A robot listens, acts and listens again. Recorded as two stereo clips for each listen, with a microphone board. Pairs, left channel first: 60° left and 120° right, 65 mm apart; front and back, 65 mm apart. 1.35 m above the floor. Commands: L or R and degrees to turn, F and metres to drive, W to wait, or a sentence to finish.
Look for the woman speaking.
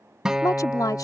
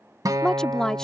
L80
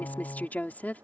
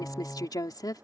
Found it: a woman speaking, straight ahead.